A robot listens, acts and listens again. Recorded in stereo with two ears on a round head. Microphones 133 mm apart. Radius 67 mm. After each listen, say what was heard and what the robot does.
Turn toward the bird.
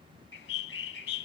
Turn 90° left.
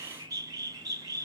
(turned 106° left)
So it is at 25° right. Turn 25° right.
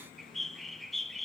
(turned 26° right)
Facing the bird.